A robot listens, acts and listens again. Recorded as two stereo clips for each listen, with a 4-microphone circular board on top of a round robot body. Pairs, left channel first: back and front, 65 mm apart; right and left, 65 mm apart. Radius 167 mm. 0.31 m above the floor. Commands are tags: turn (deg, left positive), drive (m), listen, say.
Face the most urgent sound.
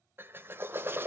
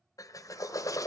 <listen/>
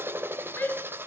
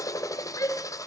<turn deg="-120"/>
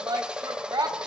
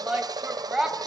<turn deg="10"/>
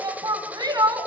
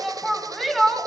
<say>Facing the shout.</say>